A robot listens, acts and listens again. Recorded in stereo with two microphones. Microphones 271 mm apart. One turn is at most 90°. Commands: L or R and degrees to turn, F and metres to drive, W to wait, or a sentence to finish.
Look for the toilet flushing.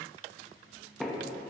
W
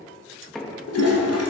L70
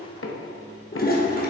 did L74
L35
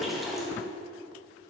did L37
Found it: a toilet flushing, straight ahead, 1 to 2 m away.